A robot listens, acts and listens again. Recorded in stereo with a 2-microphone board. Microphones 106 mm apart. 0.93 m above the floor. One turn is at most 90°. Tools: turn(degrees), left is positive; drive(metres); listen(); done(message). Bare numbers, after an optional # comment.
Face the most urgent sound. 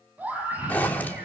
# The scream: about 15° right or 165° right.
turn(-15)
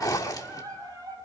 # So it is at 145° right.
turn(-90)
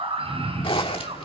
# The scream is now 60° right.
turn(-60)
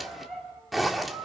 done("Facing the scream, over 4 m away.")